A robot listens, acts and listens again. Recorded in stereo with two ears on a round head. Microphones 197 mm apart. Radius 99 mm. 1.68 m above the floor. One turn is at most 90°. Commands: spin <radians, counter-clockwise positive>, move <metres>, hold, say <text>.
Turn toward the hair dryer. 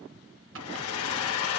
spin 1.57
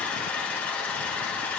say Found it: a hair dryer, straight ahead.